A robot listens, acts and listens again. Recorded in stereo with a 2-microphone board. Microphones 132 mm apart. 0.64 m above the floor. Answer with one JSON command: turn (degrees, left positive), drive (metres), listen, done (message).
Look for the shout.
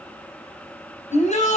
{"turn": 60}
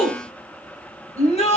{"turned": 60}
{"turn": 55}
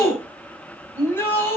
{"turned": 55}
{"turn": 15}
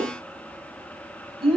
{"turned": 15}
{"done": "Found it: a shout, straight ahead, over 4 m away."}